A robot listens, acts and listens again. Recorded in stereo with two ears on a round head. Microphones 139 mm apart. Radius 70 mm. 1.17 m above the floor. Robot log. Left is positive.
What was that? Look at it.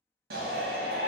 note: The shout: about 60° right or 120° right.
cmd yaw -60
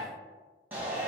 note: So it is at 10° right.
cmd yaw -10
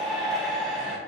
end: Found it: a shout, straight ahead.